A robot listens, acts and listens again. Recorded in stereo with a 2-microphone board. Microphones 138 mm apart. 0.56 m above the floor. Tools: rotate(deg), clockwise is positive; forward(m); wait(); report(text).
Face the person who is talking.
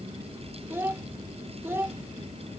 rotate(15)
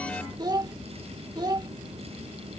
rotate(150)
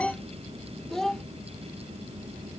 report("Facing the child speaking.")